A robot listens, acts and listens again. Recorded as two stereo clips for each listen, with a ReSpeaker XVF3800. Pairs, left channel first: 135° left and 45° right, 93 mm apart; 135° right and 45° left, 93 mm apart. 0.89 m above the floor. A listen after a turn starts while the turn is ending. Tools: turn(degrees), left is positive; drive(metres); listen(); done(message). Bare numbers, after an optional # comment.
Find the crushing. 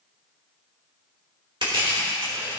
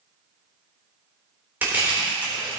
# The crushing: 25° right.
turn(-25)
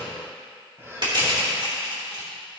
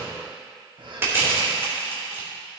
# The crushing is now 20° right.
turn(-20)
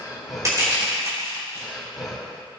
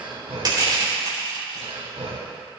done("Found it: crushing, straight ahead.")